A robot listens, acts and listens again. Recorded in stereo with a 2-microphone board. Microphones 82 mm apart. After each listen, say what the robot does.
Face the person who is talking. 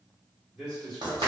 Turn 30° left.
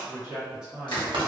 Turn 10° right.
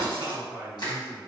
Turn 25° left.
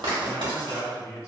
Turn 35° left.
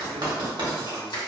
Keep listening.
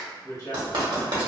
Turn 40° left.
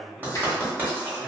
Facing the man speaking, 1 to 2 m away.